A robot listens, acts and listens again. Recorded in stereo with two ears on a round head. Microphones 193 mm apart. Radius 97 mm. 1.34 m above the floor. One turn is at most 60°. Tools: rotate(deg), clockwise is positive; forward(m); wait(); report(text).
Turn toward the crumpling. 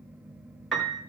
wait()
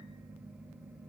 wait()
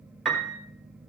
report("I can't make out crumpling, only a piano.")